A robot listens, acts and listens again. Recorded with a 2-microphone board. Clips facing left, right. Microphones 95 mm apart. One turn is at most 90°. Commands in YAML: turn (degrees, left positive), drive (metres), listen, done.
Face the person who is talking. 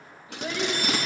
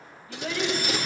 turn: 20
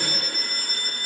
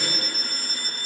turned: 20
listen: true
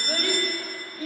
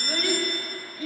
turn: 90
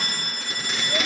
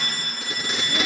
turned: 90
turn: 50
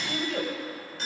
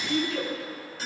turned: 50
turn: 55
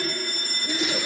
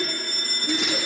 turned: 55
done: "Found it: a child speaking, straight ahead, over 4 m away."